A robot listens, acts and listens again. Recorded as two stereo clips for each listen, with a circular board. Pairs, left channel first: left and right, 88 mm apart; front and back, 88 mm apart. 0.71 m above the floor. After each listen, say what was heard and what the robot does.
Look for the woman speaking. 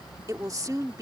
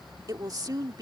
The woman speaking: 135° right. Turn 135° right.
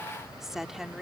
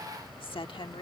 Facing the woman speaking.